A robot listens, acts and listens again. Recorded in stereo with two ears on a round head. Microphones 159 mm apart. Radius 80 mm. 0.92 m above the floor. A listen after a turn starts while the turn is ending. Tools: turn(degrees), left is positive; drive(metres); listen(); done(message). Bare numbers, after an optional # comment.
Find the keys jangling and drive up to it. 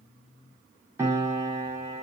listen()
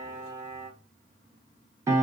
listen()
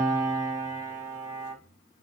done("I can't make out keys jangling, only a piano.")